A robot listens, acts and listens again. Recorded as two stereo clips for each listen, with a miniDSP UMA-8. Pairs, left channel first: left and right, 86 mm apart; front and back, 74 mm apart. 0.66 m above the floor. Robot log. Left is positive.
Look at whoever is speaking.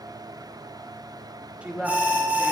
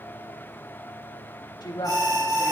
note: The woman speaking: 15° right.
cmd yaw -15
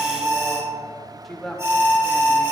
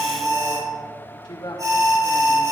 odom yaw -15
end: Facing the woman speaking.